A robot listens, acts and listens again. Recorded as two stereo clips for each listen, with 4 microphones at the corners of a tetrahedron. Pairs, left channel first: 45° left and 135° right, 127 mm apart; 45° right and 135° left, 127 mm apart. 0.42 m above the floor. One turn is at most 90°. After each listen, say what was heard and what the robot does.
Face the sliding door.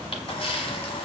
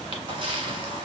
Keep listening.
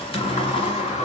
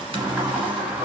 The sliding door: 60° left. Turn 60° left.
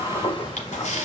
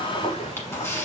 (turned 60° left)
Found it: a sliding door, straight ahead, under 1 m away.